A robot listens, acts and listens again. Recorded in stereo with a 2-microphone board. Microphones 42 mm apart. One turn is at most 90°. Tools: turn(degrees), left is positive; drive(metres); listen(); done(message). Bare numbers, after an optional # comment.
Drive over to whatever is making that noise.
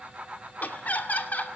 # The laughter: about 45° left or 135° left.
turn(45)
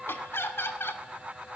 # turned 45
# So it is at 90° left.
turn(90)
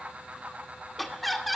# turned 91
drive(1.0)
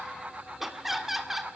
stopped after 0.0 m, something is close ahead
# The laughter is now 10° right.
turn(-10)
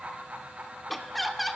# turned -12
done("Blocked. The laughter is further on, straight ahead.")